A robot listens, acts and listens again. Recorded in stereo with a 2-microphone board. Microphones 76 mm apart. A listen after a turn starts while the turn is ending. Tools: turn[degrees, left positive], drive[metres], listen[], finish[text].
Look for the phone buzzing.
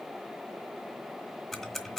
Action: listen[]
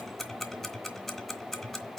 Action: listen[]
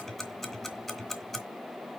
Action: finish[I can't make out a phone buzzing to turn to.]